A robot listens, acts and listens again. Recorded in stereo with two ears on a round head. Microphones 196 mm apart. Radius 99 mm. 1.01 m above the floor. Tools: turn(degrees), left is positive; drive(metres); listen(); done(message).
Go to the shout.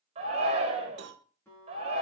turn(degrees=-30)
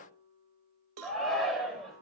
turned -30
drive(metres=1.0)
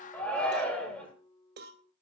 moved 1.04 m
drive(metres=1.0)
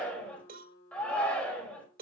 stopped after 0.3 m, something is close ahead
done("Something is in my way. I am facing the shout but have not reached it.")